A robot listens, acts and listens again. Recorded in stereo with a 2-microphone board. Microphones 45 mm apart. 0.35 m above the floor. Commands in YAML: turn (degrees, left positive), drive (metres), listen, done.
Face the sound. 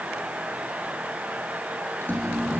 turn: 50
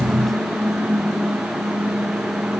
done: "Found it: a microwave, straight ahead, over 4 m away."